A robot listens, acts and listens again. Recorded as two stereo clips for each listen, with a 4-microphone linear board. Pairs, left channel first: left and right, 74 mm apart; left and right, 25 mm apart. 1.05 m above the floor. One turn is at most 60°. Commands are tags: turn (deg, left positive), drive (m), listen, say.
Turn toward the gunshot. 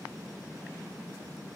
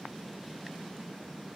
<listen/>
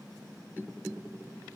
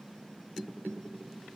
<listen/>
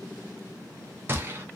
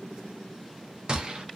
<turn deg="-30"/>
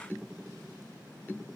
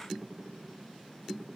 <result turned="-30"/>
<listen/>
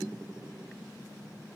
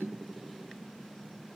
<say>I heard a gunshot, but can't make it out now. It was about straight ahead or 120° right.</say>